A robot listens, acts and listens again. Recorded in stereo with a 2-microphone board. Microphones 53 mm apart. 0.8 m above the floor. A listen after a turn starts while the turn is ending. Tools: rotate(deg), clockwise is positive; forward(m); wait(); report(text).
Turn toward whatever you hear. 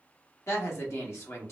rotate(-60)
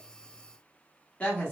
rotate(-30)
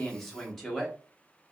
report("Found it: a woman speaking, straight ahead.")